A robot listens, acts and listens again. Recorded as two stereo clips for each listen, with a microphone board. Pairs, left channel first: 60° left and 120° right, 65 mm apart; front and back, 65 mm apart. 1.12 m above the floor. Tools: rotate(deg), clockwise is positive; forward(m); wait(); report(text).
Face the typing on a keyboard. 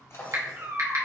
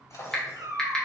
rotate(80)
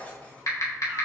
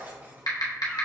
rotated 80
rotate(-25)
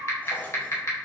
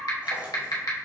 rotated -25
rotate(-20)
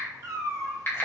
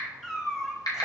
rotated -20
report("Found it: typing on a keyboard, straight ahead, 1 to 2 m away.")